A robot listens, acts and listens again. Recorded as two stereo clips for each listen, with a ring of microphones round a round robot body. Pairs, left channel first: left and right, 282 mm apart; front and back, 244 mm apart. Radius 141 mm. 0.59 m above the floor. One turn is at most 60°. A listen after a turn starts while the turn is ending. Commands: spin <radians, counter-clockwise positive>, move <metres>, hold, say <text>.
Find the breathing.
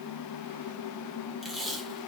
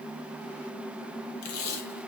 hold
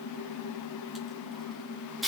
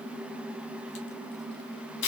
hold
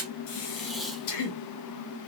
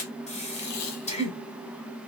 spin 1.05
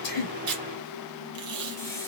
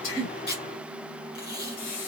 spin 0.17
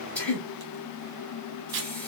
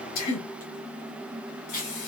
say Found it: breathing, straight ahead.